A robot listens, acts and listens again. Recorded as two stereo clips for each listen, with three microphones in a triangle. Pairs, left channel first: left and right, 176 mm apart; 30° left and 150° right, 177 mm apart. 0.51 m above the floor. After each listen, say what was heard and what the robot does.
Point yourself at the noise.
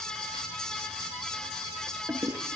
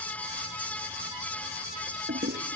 The toilet flushing: 170° right. Turn 170° right.
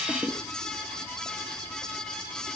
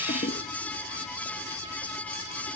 The toilet flushing is now 15° left. Turn 15° left.
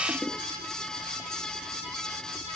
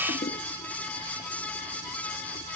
Found it: a toilet flushing, straight ahead.